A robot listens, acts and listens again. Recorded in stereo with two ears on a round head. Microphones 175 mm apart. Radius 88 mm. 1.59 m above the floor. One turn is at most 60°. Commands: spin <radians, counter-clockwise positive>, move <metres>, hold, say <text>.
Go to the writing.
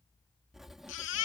spin 0.52
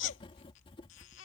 spin 1.05
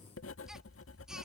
spin 1.05
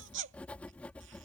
move 1.0
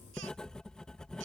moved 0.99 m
move 1.0
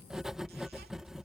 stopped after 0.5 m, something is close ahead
say I am next to the writing.